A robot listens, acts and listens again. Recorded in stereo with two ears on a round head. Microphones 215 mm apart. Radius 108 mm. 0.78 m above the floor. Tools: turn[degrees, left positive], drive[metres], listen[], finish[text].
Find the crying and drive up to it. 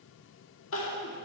Thought: The crying: about 60° left or 120° left.
Action: turn[60]
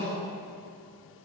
Thought: So it is at 10° left.
Action: turn[10]
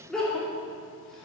Action: drive[1.0]
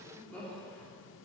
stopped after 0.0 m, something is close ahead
Action: finish[Something is in my way. I am facing the crying but have not reached it.]